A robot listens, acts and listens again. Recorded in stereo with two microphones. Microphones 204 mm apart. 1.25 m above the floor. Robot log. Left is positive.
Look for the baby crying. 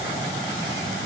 cmd idle
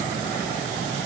cmd idle
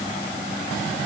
end: I can't make out a baby crying.